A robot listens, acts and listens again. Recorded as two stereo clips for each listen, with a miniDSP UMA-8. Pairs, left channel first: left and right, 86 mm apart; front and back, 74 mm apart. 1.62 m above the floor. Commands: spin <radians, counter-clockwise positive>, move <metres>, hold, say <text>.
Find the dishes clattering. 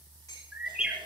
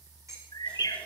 spin 2.36
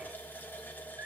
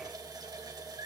hold
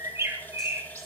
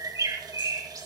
hold
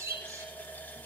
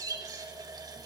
say Facing where the dishes clattering came from. I can't hear it now.